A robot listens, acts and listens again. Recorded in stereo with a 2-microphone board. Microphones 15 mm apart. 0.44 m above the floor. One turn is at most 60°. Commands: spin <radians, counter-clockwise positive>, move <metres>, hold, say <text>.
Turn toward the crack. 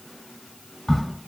spin 0.44
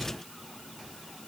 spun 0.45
hold
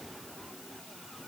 say I heard a crack, but can't make it out now. It was about 5° right or 130° left.